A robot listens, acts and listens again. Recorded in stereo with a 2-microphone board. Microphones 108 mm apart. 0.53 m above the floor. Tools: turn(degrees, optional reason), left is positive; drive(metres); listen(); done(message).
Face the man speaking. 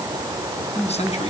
turn(degrees=90)
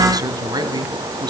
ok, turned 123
turn(degrees=-40, reason="So it is at 40° right.")
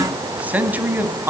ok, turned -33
turn(degrees=-20, reason="The man speaking is now 20° right.")
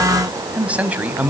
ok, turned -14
turn(degrees=-15, reason="The man speaking is now 15° right.")
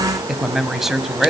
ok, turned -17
done("Facing the man speaking.")